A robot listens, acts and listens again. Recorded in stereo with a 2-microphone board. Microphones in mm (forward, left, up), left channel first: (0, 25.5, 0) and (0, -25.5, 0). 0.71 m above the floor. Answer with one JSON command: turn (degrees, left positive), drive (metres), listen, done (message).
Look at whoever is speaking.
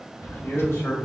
{"turn": 55}
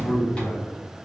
{"turn": 50}
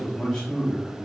{"turn": 10}
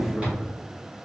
{"listen": true}
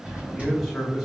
{"done": "Found it: a man speaking, straight ahead, 1 to 2 m away."}